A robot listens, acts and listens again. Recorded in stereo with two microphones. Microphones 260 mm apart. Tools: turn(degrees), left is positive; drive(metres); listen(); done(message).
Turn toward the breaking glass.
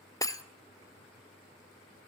turn(degrees=30)
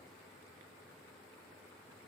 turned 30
listen()
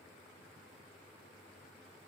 done("I heard breaking glass, but can't make it out now. It was about 15° right or 135° left.")